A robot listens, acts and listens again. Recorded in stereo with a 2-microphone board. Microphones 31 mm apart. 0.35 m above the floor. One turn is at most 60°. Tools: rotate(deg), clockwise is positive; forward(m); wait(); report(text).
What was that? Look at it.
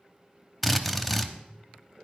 rotate(-30)
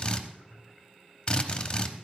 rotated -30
rotate(-60)
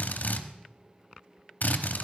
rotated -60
rotate(-60)
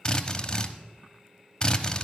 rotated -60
rotate(-35)
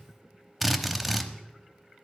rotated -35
report("Facing the drill.")